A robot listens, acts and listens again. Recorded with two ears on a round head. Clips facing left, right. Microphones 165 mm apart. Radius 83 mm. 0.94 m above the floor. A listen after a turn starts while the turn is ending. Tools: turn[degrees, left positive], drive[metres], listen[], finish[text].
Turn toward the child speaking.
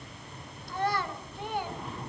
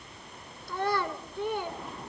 Action: turn[-90]
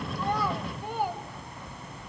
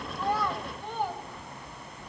Action: finish[Found it: a child speaking, straight ahead.]